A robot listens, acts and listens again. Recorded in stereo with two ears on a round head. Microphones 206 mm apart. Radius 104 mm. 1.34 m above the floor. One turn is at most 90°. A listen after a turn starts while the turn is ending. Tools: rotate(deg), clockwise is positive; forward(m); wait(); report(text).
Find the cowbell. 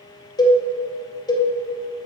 rotate(-20)
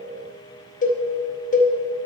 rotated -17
rotate(-90)
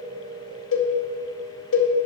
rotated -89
rotate(-55)
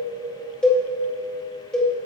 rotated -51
report("Found it: a cowbell, straight ahead, under 1 m away.")